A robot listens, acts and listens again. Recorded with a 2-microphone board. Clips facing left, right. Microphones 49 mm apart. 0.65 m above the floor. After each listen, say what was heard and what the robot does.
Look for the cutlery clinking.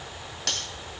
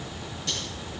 The cutlery clinking: about 70° left or 110° left. Turn 70° left.
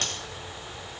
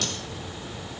So it is at 40° left. Turn 40° left.
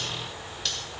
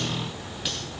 The cutlery clinking is now 10° right. Turn 10° right.
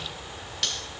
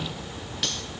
Found it: cutlery clinking, straight ahead, 2 to 4 m away.